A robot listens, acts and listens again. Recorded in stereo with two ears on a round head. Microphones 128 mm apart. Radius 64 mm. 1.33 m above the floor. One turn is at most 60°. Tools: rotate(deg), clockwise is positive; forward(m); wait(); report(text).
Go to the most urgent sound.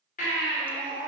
rotate(-60)
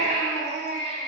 rotate(-55)
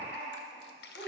rotate(-10)
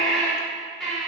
forward(1.0)
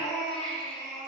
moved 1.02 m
forward(1.0)
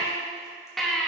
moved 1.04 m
forward(1.0)
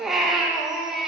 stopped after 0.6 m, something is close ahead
report("I am next to the baby crying.")